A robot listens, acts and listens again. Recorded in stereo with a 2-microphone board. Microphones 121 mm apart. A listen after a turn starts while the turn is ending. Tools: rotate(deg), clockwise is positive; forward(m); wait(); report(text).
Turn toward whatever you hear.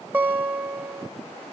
rotate(20)
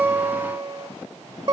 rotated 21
rotate(140)
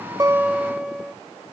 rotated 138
report("Found it: a guitar, straight ahead.")